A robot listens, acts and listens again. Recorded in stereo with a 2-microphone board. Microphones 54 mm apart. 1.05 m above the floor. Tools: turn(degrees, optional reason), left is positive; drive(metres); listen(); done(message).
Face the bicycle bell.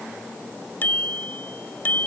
turn(degrees=35, reason="The bicycle bell: about 35° left or 145° left.")
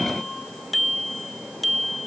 done("Facing the bicycle bell.")